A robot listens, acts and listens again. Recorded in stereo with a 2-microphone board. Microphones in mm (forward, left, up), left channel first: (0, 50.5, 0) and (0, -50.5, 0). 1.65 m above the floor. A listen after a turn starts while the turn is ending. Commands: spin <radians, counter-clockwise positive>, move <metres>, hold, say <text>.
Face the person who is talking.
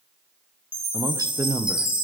spin -0.61
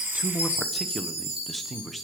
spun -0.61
say Found it: a man speaking, straight ahead.